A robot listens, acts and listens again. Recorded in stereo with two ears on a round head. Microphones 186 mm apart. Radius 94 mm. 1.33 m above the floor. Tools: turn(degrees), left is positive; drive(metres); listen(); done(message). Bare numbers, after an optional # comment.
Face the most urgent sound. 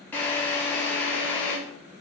listen()
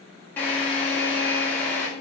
listen()
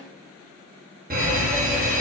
# The fire alarm: about 45° right or 135° right.
turn(-45)
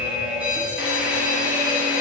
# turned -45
done("Found it: a fire alarm, straight ahead, 1 to 2 m away.")